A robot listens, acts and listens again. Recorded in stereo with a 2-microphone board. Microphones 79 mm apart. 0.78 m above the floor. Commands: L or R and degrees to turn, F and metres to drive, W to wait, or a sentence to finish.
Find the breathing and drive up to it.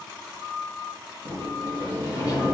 W
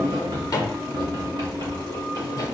W
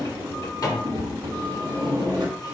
I can't make out breathing, only a drawer and a sliding door.